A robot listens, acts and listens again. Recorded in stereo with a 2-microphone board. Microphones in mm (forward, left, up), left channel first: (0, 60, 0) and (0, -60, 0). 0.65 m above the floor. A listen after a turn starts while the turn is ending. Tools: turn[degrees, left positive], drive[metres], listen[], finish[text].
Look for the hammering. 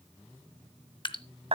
Action: listen[]
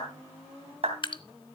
Action: listen[]
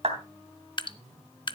Action: finish[I can't make out hammering, only a clap and dripping.]